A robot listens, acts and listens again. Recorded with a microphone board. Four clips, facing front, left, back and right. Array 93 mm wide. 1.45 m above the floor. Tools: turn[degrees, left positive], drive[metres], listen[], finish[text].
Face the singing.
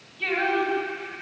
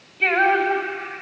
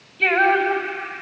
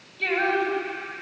Thought: The singing: 155° left.
Action: turn[155]
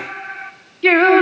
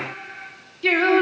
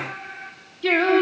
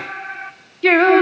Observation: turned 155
Thought: The singing is now 30° right.
Action: turn[-30]
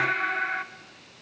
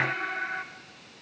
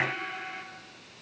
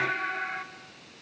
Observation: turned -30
Thought: The singing is now 10° left.
Action: turn[10]
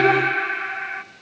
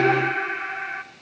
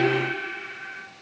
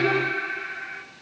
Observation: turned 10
Thought: The singing is now 35° left.
Action: turn[35]
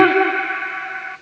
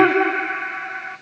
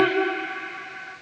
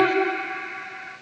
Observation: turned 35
Thought: The singing is now 35° left.
Action: turn[35]
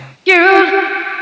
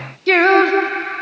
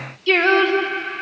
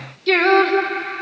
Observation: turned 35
Thought: The singing is now 10° left.
Action: turn[10]
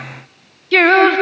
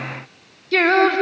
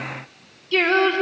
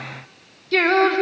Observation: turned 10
Action: finish[Found it: singing, straight ahead, 1 to 2 m away.]